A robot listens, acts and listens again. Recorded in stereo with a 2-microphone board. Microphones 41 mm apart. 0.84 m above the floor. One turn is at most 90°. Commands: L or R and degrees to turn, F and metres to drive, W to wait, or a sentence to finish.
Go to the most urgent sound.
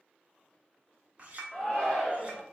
L20
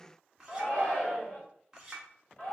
L90
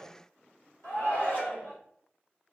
L75
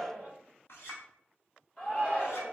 L35
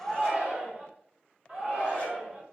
R30
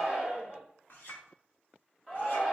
F1.0
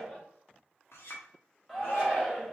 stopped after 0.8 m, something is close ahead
I am next to the shout.